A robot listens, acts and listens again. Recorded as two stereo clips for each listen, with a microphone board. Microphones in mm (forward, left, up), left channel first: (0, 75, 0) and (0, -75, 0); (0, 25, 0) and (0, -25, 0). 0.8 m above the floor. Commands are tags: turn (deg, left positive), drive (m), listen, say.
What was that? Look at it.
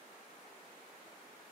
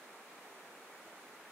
<listen/>
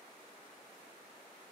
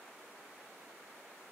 <listen/>
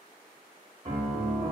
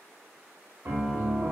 <turn deg="-55"/>
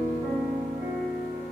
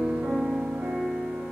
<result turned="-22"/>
<turn deg="-45"/>
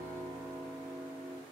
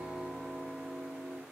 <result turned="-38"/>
<turn deg="-10"/>
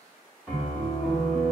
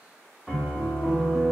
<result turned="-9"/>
<say>Facing the piano.</say>